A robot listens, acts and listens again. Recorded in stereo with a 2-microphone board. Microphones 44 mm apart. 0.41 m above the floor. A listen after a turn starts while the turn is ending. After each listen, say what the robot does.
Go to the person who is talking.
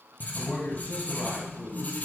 Turn 30° left.
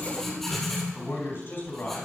Turn 115° left.
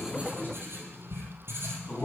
Turn 45° left.
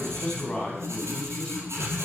Turn 20° left.
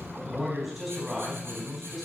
Drive 1.0 m forward.
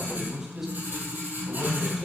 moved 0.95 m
Turn 15° right.
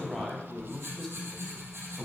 Drive 1.0 m forward.
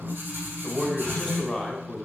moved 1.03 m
Drive 1.0 m forward.
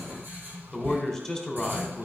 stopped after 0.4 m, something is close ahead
Turn 10° left.
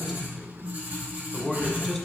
I am next to the man speaking.